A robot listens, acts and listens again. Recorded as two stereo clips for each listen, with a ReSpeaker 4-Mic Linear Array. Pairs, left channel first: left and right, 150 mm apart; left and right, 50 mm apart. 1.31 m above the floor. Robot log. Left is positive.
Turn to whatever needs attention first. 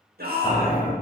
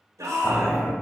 cmd yaw -90
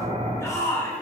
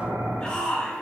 note: So it is at 20° left.
cmd yaw +20
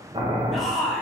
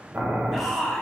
end: Facing the shout, 1 to 2 m away.